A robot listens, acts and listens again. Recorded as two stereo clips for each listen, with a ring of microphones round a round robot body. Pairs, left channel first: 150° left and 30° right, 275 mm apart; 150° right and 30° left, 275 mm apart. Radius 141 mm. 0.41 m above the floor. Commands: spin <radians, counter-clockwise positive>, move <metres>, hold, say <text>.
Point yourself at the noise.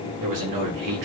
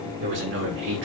spin -0.26
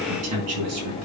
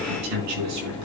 say Facing the man speaking.